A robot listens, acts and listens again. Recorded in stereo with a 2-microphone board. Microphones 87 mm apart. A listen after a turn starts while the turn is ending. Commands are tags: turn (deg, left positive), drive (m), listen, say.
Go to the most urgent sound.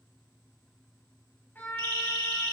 <turn deg="-90"/>
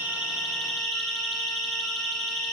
<drive m="1.0"/>
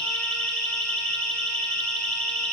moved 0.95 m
<turn deg="10"/>
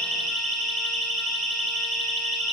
<drive m="1.0"/>
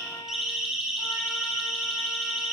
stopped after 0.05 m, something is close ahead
<say>Something is in my way. I am facing the siren but have not reached it.</say>